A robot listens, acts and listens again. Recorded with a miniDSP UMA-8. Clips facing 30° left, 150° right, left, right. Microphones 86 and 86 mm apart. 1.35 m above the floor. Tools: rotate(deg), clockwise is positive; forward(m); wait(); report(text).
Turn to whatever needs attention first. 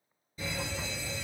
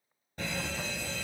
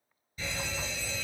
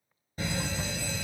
rotate(125)
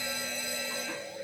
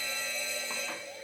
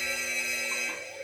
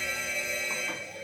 report("Facing the fire alarm.")